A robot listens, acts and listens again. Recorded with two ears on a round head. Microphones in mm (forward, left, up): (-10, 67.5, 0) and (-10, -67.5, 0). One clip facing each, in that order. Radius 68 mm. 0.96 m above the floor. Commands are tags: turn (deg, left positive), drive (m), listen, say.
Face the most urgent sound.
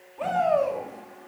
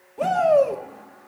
<turn deg="-45"/>
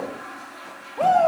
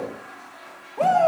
<say>Found it: a shout, straight ahead.</say>